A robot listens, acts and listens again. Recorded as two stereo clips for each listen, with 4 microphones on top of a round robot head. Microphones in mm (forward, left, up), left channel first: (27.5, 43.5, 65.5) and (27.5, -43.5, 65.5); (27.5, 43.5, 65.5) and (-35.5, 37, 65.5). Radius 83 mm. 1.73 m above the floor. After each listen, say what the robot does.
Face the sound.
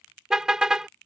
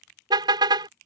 Turn 175° right.
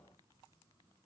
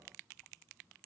Keep listening.
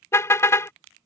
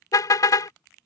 Turn 35° left.
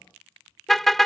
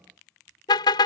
Facing the car horn.